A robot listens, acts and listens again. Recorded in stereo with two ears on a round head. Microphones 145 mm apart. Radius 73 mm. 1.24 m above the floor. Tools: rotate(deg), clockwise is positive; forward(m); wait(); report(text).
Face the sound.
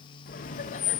rotate(-45)
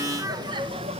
rotate(40)
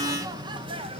rotate(35)
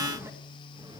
rotate(25)
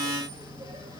rotate(25)
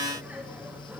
rotate(10)
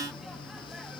report("Found it: laughter, straight ahead.")